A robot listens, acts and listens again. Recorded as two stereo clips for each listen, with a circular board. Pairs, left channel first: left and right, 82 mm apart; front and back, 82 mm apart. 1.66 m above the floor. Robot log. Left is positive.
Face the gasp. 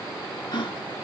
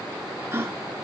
note: The gasp: 120° left.
cmd yaw +120
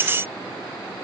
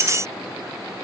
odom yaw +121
end: I heard a gasp from this way, but can't make it out now.